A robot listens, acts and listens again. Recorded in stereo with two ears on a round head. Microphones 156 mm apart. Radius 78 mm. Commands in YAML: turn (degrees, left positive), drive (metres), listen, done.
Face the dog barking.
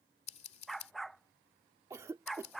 turn: 30
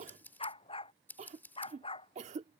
turn: 150
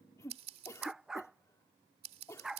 done: "Found it: a dog barking, straight ahead."